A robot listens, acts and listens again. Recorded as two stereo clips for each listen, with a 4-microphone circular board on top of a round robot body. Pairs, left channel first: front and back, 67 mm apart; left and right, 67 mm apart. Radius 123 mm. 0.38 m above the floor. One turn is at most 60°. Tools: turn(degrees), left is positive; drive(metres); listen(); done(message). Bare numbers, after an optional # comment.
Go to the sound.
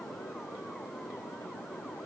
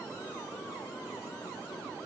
listen()
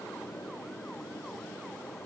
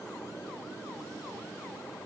listen()
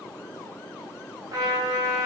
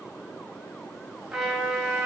# The trumpet: 175° right.
turn(-60)
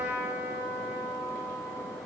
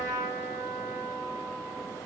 # The trumpet is now 115° right.
turn(-60)
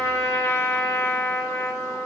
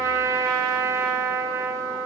# The trumpet is now 50° right.
turn(-50)
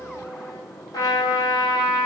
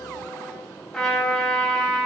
drive(1.0)
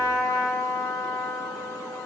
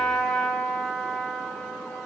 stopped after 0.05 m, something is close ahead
done("Blocked. The trumpet is further on, straight ahead.")